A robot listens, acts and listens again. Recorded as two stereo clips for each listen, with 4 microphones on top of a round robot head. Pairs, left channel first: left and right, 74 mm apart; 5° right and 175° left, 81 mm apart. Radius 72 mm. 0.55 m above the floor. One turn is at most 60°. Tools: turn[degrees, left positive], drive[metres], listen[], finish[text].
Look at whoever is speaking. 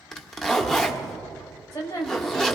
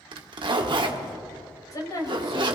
Thought: The woman speaking: 40° left.
Action: turn[40]
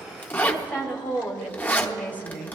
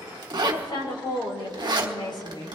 Thought: The woman speaking is now 20° left.
Action: turn[20]
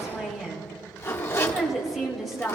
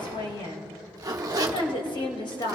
Action: finish[Found it: a woman speaking, straight ahead, 2 to 4 m away.]